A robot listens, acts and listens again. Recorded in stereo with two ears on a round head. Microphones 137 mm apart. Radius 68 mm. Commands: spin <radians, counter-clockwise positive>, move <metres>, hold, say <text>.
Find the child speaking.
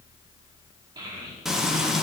spin -0.52
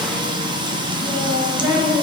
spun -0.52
spin -0.35
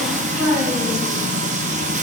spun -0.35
say Facing the child speaking.